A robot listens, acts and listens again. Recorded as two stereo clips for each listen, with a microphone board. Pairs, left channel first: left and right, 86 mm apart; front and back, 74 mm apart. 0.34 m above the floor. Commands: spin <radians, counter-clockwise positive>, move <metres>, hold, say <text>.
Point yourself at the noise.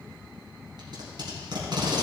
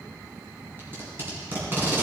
spin -2.09
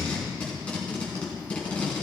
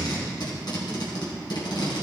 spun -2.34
spin 0.26
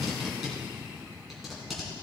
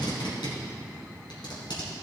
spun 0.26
say Found it: tape being pulled, straight ahead.